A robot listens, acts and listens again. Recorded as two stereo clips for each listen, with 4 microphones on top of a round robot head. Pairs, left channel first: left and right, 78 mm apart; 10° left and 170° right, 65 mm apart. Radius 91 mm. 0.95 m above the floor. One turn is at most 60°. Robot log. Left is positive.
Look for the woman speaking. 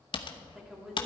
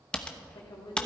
end: Facing the woman speaking, 2 to 4 m away.